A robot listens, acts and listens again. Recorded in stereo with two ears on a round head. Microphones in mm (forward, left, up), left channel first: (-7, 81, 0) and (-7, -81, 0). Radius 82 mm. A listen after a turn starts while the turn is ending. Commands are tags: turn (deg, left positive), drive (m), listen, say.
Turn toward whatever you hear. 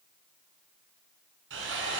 <turn deg="-90"/>
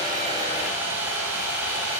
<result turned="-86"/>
<turn deg="-10"/>
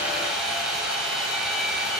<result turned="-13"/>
<say>Facing the sawing.</say>